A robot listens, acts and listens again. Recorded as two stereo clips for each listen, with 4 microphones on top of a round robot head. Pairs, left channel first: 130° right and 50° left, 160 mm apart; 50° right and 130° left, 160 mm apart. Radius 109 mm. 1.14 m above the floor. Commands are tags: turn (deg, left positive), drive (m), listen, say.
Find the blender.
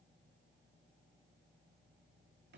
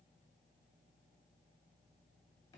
<listen/>
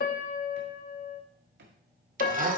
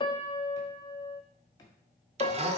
<turn deg="80"/>
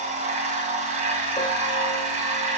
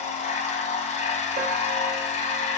<say>Facing the blender, 1 to 2 m away.</say>